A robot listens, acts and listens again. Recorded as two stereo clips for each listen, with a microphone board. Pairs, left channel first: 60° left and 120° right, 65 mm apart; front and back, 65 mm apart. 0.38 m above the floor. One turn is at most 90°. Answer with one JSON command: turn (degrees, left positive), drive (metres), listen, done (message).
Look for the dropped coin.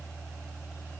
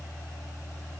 {"listen": true}
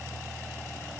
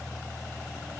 {"listen": true}
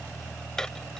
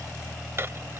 {"turn": 90}
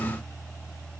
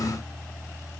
{"turn": 50}
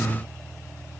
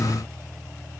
{"done": "I heard a dropped coin from this way, but can't make it out now."}